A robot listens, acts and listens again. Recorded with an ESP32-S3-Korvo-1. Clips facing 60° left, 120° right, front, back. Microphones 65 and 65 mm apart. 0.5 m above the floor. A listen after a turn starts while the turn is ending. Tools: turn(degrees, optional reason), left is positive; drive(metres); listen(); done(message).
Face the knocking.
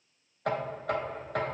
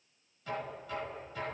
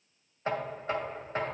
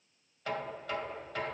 turn(degrees=55, reason="The knocking: 55° left.")
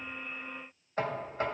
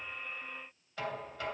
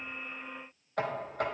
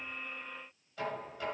turn(degrees=15, reason="The knocking is now 15° left.")
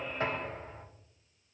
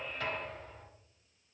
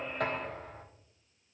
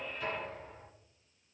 done("Found it: knocking, straight ahead.")